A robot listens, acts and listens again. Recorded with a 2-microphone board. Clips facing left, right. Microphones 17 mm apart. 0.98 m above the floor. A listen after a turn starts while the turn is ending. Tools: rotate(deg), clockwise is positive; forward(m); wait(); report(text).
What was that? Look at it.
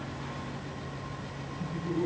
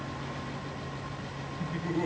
rotate(55)
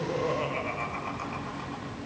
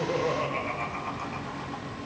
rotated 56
rotate(-10)
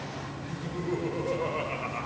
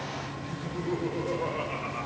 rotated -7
rotate(-25)
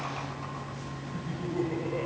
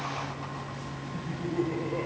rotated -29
report("Found it: laughter, straight ahead.")